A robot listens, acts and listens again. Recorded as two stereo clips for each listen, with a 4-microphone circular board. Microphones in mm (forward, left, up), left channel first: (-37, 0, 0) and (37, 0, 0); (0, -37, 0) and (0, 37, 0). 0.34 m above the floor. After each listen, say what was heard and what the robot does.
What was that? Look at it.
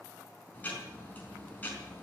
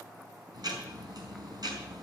The ticking: 115° left. Turn 115° left.
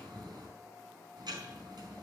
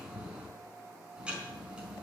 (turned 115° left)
The ticking is now 15° left. Turn 15° left.
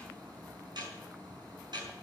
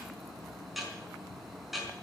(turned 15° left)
Found it: ticking, straight ahead, over 4 m away.